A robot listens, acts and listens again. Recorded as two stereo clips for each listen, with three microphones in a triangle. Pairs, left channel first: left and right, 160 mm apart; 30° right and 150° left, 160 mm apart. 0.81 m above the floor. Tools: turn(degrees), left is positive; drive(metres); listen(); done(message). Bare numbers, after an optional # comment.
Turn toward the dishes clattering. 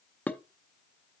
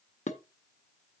# The dishes clattering: 10° left.
turn(10)
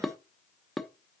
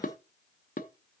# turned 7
done("Facing the dishes clattering, under 1 m away.")